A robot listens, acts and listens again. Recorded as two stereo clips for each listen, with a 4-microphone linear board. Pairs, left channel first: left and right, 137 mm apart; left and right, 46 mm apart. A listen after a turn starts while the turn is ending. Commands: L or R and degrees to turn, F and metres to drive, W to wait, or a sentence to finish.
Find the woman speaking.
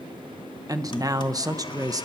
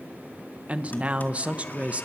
R30
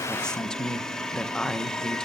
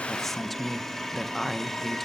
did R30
Found it: a woman speaking, straight ahead, 1 to 2 m away.